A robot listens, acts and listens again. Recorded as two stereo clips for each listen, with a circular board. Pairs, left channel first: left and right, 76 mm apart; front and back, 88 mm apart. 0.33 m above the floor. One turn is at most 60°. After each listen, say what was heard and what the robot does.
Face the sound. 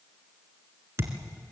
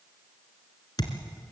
The thud: 35° right. Turn 35° right.
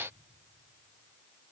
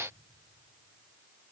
I heard a thud from this way, but can't make it out now.